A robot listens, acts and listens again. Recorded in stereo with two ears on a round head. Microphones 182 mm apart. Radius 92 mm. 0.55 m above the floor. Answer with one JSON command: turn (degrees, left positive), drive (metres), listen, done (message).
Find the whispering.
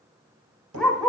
{"listen": true}
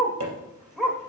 {"listen": true}
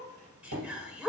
{"turn": -30}
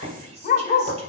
{"turn": -140}
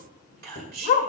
{"turn": -50}
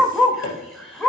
{"done": "Facing the whispering."}